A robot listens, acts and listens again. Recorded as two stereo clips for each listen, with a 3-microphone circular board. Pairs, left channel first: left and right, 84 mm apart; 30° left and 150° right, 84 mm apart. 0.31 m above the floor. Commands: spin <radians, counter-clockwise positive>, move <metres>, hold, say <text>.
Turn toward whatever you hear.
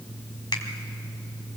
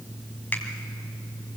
hold
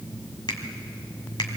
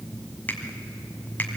hold
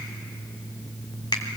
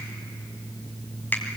spin 1.66
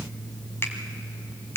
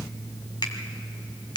spin 0.61
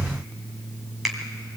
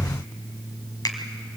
say Facing the finger snap, 2 to 4 m away.